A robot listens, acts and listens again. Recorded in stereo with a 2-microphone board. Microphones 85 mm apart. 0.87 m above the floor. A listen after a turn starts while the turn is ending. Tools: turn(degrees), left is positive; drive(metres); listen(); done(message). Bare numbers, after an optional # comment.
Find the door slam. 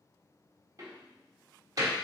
# The door slam: about 45° right or 135° right.
turn(-45)
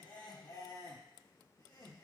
listen()
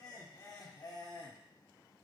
done("I heard a door slam, but can't make it out now. It was about straight ahead or 90° right.")